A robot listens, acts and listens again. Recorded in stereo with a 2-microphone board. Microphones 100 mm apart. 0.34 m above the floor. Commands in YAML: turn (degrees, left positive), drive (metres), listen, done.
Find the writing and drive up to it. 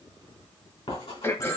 turn: 70
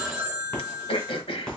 turn: 10
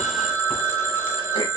listen: true
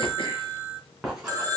drive: 1.0
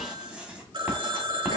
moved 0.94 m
turn: -10
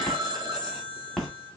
drive: 1.0
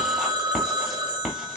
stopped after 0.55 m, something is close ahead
done: "I am next to the writing."